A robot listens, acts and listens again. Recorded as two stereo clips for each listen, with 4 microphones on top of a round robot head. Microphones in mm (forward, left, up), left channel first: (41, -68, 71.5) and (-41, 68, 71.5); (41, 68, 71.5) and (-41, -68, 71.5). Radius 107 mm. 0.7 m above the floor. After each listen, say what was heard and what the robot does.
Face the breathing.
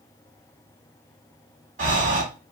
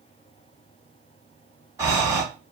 The breathing: 165° left. Turn 165° left.
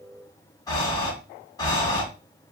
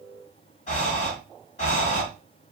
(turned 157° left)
The breathing is now 10° left. Turn 10° left.
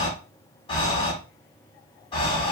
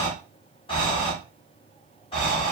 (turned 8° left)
Found it: breathing, straight ahead, 1 to 2 m away.